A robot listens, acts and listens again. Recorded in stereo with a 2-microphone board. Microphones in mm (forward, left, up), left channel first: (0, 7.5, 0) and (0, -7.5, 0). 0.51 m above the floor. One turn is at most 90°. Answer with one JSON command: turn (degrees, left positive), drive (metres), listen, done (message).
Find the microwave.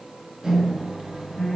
{"turn": -60}
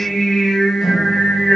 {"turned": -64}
{"listen": true}
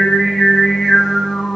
{"listen": true}
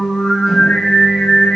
{"done": "I heard a microwave, but can't make it out now. It was about straight ahead or 55° right."}